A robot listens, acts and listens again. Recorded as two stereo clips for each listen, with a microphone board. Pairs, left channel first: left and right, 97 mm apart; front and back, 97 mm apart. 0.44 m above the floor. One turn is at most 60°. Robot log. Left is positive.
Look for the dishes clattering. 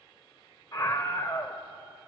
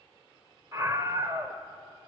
cmd idle
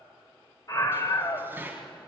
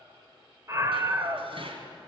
note: The dishes clattering: 160° right.
cmd yaw -60
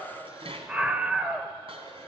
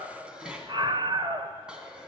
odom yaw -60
note: The dishes clattering is now 100° right.
cmd yaw -60
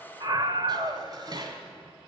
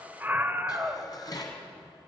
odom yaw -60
note: The dishes clattering is now 45° right.
cmd yaw -45
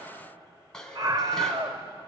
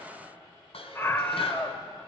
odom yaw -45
end: Found it: dishes clattering, straight ahead.